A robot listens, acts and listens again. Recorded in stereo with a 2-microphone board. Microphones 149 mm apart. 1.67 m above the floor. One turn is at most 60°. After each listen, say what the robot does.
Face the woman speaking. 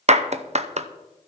Keep listening.
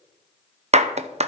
Keep listening.
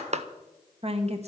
Turn 45° right.
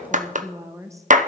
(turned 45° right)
Turn 20° right.
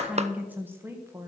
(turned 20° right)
Turn 20° right.
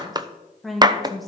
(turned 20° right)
Facing the woman speaking.